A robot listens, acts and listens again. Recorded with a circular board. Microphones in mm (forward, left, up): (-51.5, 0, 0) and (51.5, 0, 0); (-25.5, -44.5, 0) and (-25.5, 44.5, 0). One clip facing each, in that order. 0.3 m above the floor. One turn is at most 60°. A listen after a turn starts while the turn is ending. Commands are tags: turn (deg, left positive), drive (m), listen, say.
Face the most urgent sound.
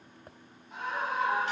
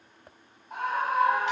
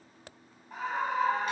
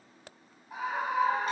<turn deg="10"/>
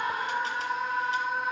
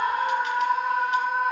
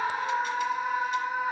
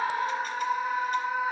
<say>Facing the scream.</say>